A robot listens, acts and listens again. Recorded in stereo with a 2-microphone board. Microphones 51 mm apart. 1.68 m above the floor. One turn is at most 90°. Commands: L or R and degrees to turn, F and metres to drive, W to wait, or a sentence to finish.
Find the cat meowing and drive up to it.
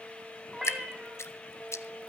R30
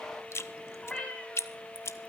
L15
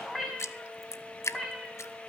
F1.0
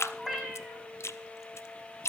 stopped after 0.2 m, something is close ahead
Blocked. The cat meowing is further on, straight ahead.